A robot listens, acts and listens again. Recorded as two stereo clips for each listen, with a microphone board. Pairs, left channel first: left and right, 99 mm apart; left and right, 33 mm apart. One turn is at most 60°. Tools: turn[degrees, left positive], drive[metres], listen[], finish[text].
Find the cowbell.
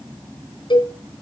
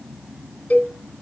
Thought: The cowbell: about 55° left or 125° left.
Action: turn[55]
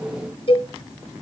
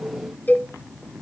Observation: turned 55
Thought: So it is at 70° left.
Action: turn[60]
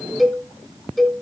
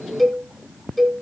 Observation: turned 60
Action: finish[Facing the cowbell.]